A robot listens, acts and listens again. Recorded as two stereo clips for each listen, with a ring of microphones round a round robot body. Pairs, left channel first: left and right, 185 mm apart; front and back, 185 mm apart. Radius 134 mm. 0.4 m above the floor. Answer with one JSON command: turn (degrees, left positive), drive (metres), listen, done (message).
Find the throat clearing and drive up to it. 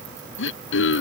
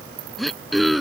{"turn": 90}
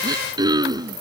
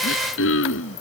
{"turn": -20}
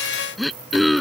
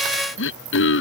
{"drive": 1.0}
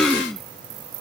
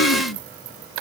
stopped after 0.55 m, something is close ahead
{"done": "Blocked. The throat clearing is further on, straight ahead."}